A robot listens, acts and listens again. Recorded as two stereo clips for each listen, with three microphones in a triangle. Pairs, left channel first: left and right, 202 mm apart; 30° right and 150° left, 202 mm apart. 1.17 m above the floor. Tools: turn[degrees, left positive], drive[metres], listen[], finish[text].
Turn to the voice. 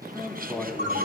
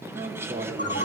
Thought: The man speaking: 175° left.
Action: turn[175]
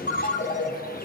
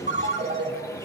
Action: listen[]
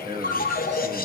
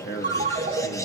Thought: The man speaking is now 30° right.
Action: turn[-30]
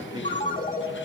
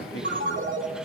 Thought: The man speaking is now 25° right.
Action: turn[-25]
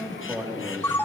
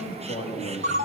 Thought: The man speaking is now 20° right.
Action: turn[-20]
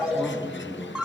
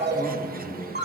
Thought: The man speaking is now 10° right.
Action: turn[-10]
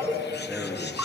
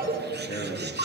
Action: finish[Found it: a man speaking, straight ahead.]